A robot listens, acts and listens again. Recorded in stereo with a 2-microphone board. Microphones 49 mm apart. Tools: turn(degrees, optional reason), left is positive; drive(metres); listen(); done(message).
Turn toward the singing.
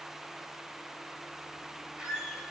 listen()
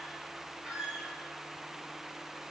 listen()
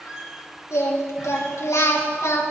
turn(degrees=90)
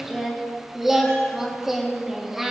done("Found it: singing, straight ahead.")